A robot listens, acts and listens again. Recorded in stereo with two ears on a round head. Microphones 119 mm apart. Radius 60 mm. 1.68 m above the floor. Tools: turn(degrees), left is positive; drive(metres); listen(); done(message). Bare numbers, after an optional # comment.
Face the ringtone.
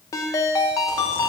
# The ringtone: about 20° left or 160° left.
turn(20)
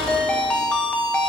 done("Found it: a ringtone, straight ahead, 1 to 2 m away.")